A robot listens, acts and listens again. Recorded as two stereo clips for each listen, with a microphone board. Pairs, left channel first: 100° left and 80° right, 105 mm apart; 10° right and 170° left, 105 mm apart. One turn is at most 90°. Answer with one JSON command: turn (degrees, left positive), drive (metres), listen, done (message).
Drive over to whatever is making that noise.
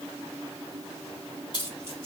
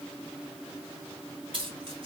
{"turn": 90}
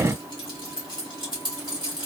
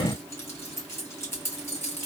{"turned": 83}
{"turn": 55}
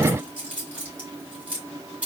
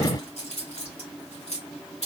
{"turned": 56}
{"drive": 1.0}
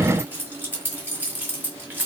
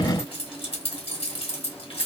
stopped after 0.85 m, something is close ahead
{"turn": -10}
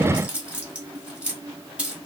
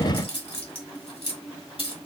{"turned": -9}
{"done": "I am next to the keys jangling."}